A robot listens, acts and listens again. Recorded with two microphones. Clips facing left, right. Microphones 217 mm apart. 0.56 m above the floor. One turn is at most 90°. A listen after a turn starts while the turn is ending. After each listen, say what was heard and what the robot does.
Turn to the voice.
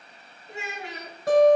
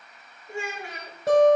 The child speaking: about 20° left or 160° left. Turn 20° left.
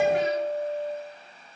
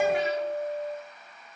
Keep listening.
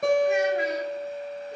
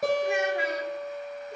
Keep listening.
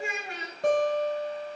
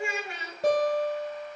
So it is at 140° left. Turn 90° left.
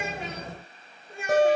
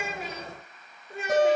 The child speaking is now 45° left. Turn 45° left.
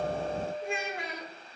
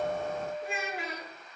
Found it: a child speaking, straight ahead.